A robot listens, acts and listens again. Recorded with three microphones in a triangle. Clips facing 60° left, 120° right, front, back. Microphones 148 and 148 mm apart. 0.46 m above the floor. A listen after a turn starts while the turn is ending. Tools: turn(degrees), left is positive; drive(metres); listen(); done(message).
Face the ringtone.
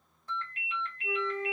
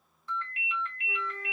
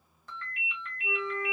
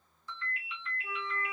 turn(degrees=20)
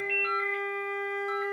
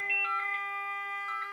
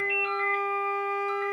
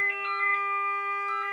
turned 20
listen()
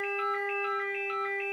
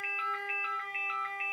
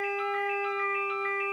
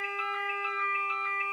listen()
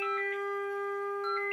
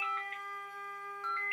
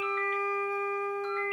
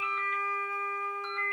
done("I heard a ringtone from this way, but can't make it out now.")